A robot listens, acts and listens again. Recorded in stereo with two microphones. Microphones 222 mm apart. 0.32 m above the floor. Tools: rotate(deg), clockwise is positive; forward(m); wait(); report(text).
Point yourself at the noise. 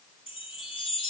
rotate(-25)
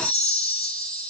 report("Found it: a chime, straight ahead, 2 to 4 m away.")